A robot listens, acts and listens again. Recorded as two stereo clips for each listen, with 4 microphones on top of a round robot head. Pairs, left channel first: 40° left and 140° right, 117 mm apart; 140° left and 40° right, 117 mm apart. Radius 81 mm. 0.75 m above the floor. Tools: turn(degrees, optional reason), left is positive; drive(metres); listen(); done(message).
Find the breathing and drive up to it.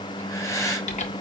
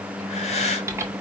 turn(degrees=105, reason="The breathing: 105° left.")
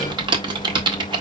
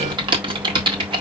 listen()
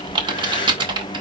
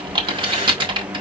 listen()
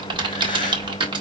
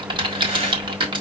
done("Facing where the breathing came from. I can't hear it now. I did not reach it.")